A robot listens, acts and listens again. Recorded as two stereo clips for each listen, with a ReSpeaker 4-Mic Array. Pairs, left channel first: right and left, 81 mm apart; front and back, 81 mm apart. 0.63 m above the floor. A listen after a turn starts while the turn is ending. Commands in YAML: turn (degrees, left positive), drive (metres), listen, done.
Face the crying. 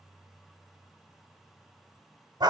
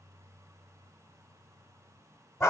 listen: true
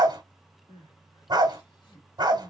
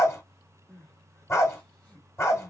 turn: -70
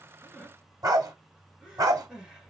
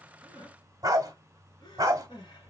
done: "Facing the crying, 1 to 2 m away."